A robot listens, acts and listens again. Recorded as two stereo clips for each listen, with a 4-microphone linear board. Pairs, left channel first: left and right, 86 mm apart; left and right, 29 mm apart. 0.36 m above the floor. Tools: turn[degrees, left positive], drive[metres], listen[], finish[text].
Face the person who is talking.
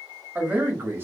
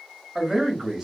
Thought: The man speaking: about 25° right or 155° right.
Action: turn[-25]
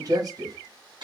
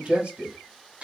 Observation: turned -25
Thought: So it is at 130° right.
Action: turn[-130]
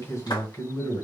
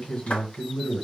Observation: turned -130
Thought: The man speaking is now 45° left.
Action: turn[45]
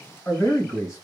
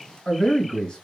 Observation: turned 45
Thought: The man speaking is now 35° left.
Action: turn[35]
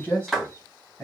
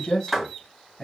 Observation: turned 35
Thought: The man speaking is now 25° left.
Action: turn[25]
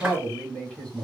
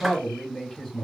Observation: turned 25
Thought: The man speaking is now 10° left.
Action: turn[10]
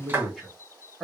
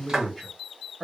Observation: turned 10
Action: finish[Found it: a man speaking, straight ahead.]